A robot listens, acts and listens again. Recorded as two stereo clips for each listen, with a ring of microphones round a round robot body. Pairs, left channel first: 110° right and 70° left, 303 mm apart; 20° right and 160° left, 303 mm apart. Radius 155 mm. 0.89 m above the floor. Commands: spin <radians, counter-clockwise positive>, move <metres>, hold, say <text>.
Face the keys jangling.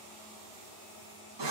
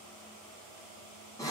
hold
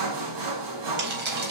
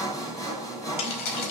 say Found it: keys jangling, straight ahead, over 4 m away.